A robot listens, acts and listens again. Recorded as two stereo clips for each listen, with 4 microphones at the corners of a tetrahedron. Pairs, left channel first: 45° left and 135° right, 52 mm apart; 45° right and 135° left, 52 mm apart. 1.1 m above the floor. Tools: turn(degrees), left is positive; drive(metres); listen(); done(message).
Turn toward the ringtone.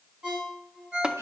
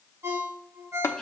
turn(degrees=150)
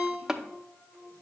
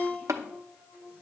done("Found it: a ringtone, straight ahead, 2 to 4 m away.")